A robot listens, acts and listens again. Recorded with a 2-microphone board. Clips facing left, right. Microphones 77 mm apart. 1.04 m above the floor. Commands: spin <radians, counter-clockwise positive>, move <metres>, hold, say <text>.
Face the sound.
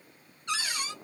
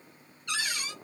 spin 0.52
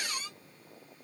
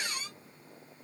say Found it: a cupboard door, straight ahead.